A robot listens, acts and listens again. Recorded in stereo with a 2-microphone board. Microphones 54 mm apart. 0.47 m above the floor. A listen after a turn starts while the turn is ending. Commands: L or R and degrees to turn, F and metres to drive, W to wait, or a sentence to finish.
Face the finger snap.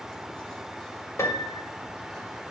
W
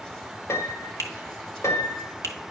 L60
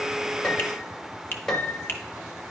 L40
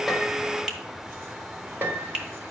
R15
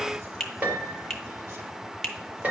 Facing the finger snap, 1 to 2 m away.